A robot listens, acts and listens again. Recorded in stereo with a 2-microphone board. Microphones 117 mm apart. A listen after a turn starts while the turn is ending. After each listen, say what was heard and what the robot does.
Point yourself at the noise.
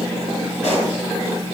The pop: about 70° left or 110° left. Turn 70° left.
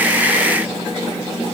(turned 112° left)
Keep listening.
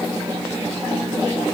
I heard a pop, but can't make it out now. It was about 5° right or 40° right.